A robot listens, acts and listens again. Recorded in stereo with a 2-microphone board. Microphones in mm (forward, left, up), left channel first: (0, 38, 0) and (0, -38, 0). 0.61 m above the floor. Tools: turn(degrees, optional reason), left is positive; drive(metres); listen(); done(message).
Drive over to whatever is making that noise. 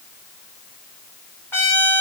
turn(degrees=35, reason="The trumpet: about 35° left or 145° left.")
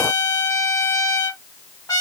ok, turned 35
turn(degrees=105, reason="So it is at 105° left.")
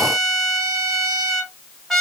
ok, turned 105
drive(metres=1.0)
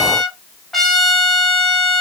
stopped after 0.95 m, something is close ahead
done("I am next to the trumpet.")